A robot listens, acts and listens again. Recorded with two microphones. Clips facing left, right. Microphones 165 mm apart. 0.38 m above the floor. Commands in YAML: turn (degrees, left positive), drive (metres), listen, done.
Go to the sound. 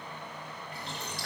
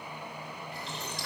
turn: 60
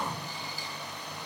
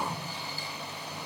turn: 15
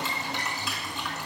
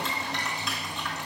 drive: 1.0
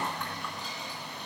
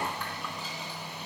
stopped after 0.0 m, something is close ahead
done: "Blocked. The boiling is further on, straight ahead."